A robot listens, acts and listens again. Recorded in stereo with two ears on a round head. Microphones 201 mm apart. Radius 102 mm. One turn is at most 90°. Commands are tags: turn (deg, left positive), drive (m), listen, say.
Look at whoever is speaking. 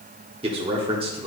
<turn deg="-25"/>
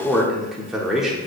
<say>Facing the man speaking, 1 to 2 m away.</say>